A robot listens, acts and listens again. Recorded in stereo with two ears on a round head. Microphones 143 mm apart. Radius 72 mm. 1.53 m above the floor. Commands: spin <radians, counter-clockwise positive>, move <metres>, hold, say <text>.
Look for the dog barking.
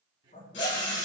spin 0.87
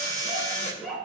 say Found it: a dog barking, straight ahead, over 4 m away.